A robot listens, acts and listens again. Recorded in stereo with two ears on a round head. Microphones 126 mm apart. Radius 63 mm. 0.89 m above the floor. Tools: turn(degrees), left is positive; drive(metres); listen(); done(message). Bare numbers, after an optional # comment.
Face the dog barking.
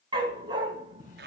# The dog barking: about 30° right or 150° right.
turn(-30)
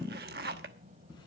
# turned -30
listen()
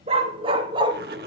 # The dog barking: about 30° right or 150° right.
turn(-30)
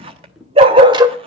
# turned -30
# The dog barking: about 30° right or 150° right.
turn(-30)
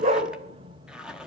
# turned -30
# The dog barking: about 40° right or 140° right.
turn(-40)
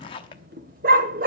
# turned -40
# So it is at 115° right.
turn(-115)
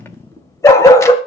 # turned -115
# The dog barking is now 20° left.
turn(20)
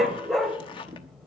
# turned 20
done("Facing the dog barking, 1 to 2 m away.")